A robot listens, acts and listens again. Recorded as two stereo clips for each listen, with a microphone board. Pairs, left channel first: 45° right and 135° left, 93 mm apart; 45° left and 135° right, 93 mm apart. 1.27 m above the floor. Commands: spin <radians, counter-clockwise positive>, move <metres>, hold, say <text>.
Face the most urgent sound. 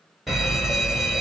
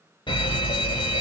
spin 0.87
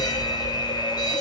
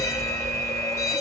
spin -0.17
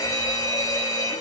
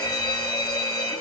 say Found it: a fire alarm, straight ahead, 1 to 2 m away.